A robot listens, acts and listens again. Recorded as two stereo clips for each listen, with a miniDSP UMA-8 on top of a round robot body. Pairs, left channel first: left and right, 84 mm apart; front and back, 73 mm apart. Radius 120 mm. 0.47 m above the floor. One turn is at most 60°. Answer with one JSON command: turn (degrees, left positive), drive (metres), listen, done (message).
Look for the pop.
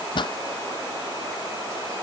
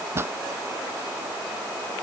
{"turn": 60}
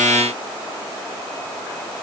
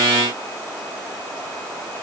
{"turn": 60}
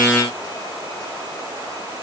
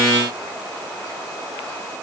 {"done": "Facing where the pop came from. I can't hear it now."}